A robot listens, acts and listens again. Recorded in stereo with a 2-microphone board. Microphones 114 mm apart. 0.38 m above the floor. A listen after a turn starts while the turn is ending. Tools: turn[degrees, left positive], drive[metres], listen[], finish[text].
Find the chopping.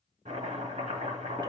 Action: turn[-90]
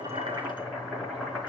Action: finish[Found it: chopping, straight ahead.]